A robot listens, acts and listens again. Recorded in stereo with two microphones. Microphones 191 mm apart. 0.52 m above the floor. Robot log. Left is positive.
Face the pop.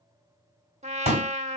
note: The pop: about 35° left or 145° left.
cmd yaw +35
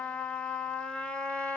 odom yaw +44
cmd idle
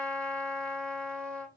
end: I heard a pop, but can't make it out now. It was about 10° right or 105° left.